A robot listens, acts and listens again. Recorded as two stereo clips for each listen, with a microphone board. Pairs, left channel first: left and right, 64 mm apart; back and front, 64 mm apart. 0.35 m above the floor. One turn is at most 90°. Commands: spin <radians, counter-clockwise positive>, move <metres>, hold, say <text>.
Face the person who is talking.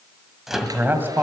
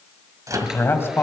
spin -1.57
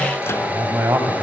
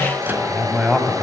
spin -1.48
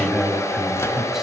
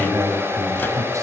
spin -0.17
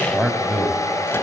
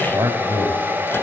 say Facing the man speaking, 2 to 4 m away.